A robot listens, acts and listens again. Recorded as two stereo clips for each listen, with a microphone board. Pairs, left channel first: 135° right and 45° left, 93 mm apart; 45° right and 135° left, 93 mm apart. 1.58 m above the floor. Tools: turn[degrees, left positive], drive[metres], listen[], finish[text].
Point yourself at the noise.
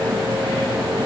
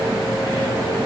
Action: listen[]
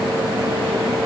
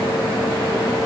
Action: listen[]
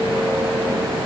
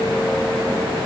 Action: finish[I can't make out anything to turn to.]